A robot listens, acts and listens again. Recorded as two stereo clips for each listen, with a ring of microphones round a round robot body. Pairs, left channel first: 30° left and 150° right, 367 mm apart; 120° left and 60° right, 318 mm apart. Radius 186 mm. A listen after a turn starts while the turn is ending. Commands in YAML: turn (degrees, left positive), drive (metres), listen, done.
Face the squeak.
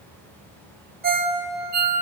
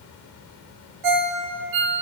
listen: true
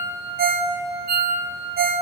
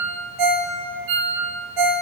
listen: true
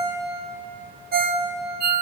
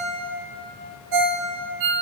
done: "I can't make out a squeak to turn to."